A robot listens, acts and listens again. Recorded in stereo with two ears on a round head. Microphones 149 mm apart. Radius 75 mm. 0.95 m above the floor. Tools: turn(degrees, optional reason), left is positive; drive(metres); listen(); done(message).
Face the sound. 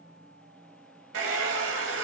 turn(degrees=-90)
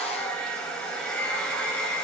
done("Found it: a hair dryer, straight ahead.")